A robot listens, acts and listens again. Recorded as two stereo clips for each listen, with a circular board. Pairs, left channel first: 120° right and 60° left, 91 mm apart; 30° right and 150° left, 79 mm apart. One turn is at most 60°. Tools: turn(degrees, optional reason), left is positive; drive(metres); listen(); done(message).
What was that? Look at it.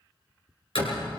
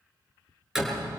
turn(degrees=-60, reason="The door slam: 125° right.")
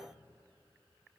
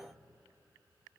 turn(degrees=-60, reason="Nothing new. It was at 65° right.")
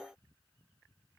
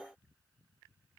done("I heard a door slam from this way, but can't make it out now.")